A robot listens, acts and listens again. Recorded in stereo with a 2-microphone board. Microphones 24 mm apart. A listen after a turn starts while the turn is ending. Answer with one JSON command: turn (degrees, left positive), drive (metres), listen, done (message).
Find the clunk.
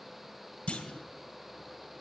{"turn": 55}
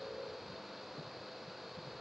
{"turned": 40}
{"listen": true}
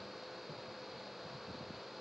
{"done": "I heard a clunk, but can't make it out now. It was about 15° left or 85° left."}